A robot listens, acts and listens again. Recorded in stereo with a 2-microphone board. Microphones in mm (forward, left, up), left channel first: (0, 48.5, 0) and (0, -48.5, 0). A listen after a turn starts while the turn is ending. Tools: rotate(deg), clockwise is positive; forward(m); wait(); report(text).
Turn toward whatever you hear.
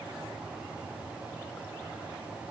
wait()
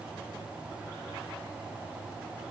wait()
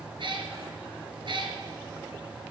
rotate(60)
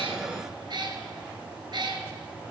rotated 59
rotate(55)
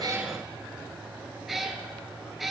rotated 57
report("Found it: a cat meowing, straight ahead.")